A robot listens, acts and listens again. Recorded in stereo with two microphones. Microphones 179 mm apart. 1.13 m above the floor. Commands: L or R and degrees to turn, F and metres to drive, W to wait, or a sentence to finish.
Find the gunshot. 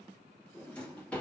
W
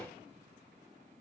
W
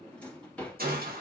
R55
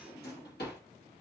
W
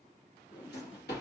I heard a gunshot, but can't make it out now. It was about straight ahead or 70° right.